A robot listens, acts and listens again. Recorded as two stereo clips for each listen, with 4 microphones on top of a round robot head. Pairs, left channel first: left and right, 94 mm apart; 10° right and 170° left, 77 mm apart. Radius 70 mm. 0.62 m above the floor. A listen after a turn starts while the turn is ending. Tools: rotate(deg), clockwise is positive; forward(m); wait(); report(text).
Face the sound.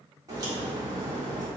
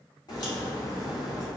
rotate(40)
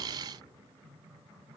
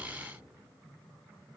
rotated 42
report("Facing where the crack came from. I can't hear it now.")